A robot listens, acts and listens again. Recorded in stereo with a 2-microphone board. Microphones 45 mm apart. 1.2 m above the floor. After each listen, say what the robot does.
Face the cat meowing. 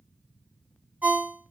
Keep listening.
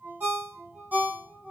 Keep listening.
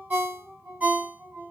I can't make out a cat meowing to turn to.